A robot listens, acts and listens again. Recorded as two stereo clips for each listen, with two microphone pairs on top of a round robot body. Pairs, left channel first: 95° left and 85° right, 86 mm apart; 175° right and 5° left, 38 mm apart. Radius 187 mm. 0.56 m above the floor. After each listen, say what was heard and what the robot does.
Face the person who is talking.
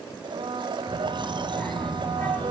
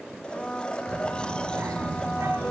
The child speaking: 25° left. Turn 25° left.
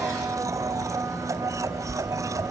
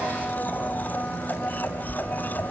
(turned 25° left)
Facing the child speaking, 2 to 4 m away.